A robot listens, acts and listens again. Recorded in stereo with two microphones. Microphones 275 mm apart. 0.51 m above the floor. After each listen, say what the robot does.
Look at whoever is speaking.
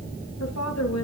Turn 75° left.
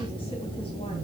Keep listening.
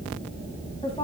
Turn 20° left.
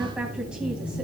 Keep listening.
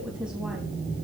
Keep listening.
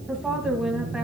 Found it: a woman speaking, straight ahead.